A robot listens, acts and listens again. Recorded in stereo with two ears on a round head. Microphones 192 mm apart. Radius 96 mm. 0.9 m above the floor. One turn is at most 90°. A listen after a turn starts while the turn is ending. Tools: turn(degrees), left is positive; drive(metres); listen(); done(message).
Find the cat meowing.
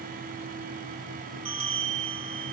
listen()
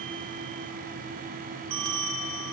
listen()
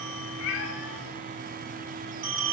turn(degrees=65)
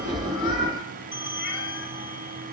listen()
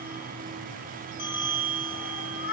turn(degrees=50)
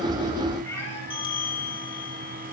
turn(degrees=15)
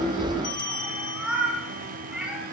done("Found it: a cat meowing, straight ahead, over 4 m away.")